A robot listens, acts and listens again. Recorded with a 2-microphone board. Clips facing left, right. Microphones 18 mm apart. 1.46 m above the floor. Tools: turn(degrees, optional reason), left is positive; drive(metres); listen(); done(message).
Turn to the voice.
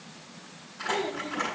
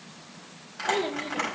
turn(degrees=-55, reason="The child speaking: about 55° right or 125° right.")
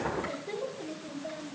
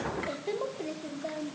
turn(degrees=-70, reason="So it is at 70° right.")
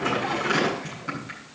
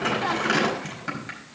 listen()
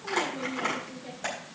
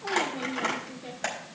turn(degrees=-60, reason="The child speaking is now 60° right.")
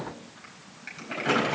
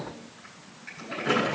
turn(degrees=-15, reason="The child speaking is now 15° right.")
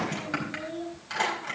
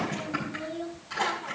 turn(degrees=-10, reason="The child speaking is now 10° right.")
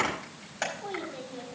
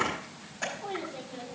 done("Found it: a child speaking, straight ahead.")